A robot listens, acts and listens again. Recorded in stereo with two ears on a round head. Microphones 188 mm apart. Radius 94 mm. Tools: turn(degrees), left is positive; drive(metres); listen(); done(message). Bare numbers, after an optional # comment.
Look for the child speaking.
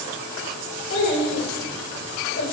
# The child speaking: about 60° left or 120° left.
turn(60)
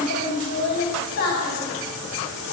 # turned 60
# So it is at 45° left.
turn(45)
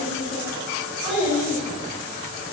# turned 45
done("Facing the child speaking.")